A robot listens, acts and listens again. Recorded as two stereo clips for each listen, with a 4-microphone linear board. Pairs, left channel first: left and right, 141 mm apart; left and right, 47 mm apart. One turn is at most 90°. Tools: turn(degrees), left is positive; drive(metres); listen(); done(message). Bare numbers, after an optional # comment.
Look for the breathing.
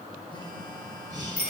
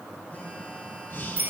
# The breathing: about 55° left or 125° left.
turn(55)
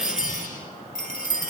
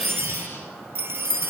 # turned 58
listen()
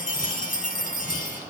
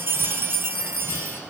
listen()
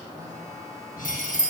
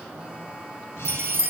done("I heard breathing, but can't make it out now. It was about straight ahead or 65° left.")